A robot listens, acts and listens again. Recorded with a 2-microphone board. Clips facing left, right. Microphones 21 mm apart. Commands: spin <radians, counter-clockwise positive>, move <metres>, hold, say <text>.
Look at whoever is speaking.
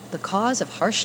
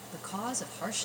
spin 0.96
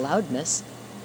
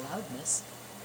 spin 1.13
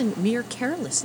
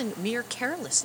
say Found it: a woman speaking, straight ahead.